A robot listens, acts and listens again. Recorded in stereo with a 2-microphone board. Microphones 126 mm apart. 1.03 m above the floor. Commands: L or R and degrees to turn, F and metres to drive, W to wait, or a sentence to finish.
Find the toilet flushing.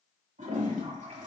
R75
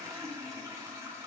R25
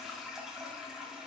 Found it: a toilet flushing, straight ahead.